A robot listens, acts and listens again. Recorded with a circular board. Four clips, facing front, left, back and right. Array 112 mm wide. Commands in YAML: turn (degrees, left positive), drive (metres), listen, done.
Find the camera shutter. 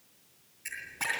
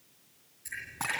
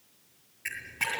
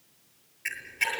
turn: -115
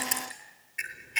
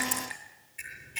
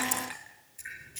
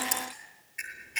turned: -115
turn: -25
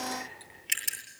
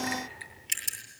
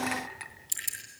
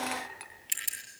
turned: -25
done: "Found it: a camera shutter, straight ahead."